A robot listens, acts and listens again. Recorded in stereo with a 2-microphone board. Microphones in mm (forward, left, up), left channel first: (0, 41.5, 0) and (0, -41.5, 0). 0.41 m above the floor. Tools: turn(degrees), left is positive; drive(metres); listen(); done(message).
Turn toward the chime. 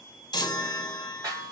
turn(degrees=65)
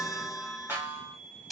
done("Facing the chime, 1 to 2 m away.")